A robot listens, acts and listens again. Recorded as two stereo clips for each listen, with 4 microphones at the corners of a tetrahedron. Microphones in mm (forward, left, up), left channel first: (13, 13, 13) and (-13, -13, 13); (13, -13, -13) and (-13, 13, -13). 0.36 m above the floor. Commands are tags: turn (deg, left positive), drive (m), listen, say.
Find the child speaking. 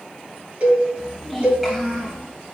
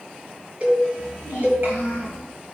<turn deg="145"/>
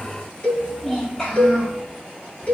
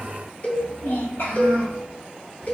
<turn deg="-30"/>
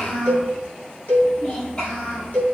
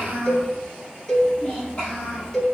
<say>Found it: a child speaking, straight ahead, over 4 m away.</say>